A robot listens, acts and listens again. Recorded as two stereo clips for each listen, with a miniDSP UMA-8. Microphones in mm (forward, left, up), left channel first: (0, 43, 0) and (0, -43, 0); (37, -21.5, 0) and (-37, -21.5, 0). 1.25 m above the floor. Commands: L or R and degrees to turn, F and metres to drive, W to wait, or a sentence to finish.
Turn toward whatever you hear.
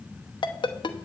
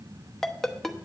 L85
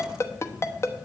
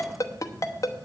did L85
L35
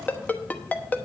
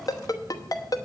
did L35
L20
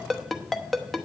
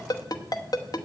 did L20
Facing the ringtone, under 1 m away.